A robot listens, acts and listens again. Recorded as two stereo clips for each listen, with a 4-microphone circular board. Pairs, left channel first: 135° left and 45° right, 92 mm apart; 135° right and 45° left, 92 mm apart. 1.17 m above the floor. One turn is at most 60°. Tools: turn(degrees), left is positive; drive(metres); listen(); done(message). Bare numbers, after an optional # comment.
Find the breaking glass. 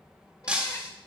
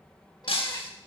# The breaking glass: 125° right.
turn(-60)
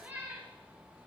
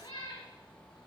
# Nothing new. It was at 65° right.
turn(-60)
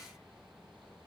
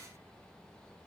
done("Facing where the breaking glass came from. I can't hear it now.")